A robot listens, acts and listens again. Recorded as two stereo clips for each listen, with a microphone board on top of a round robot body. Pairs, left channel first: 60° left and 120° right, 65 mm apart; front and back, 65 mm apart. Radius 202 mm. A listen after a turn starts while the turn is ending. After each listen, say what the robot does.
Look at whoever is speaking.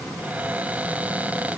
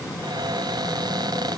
Keep listening.
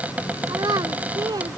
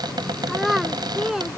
Turn 95° right.
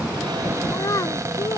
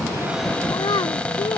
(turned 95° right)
Turn 20° left.
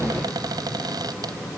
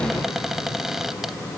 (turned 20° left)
Keep listening.
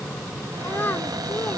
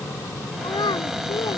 Found it: a child speaking, straight ahead.